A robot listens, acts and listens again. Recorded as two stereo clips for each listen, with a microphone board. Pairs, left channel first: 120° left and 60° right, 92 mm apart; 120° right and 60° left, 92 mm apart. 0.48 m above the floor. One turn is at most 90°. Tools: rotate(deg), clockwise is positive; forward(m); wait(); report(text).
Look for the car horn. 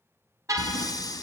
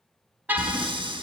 rotate(10)
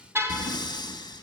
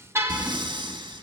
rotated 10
report("Found it: a car horn, straight ahead.")